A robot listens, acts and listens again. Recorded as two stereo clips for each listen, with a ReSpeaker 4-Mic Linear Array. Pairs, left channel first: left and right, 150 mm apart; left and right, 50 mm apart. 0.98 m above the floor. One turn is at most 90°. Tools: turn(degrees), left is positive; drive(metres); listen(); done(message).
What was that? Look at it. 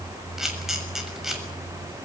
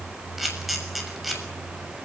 turn(degrees=-30)
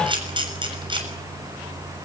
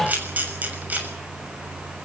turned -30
turn(degrees=-90)
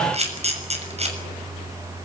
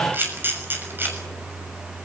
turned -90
turn(degrees=-45)
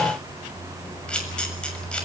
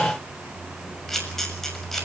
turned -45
done("Found it: a camera shutter, straight ahead, over 4 m away.")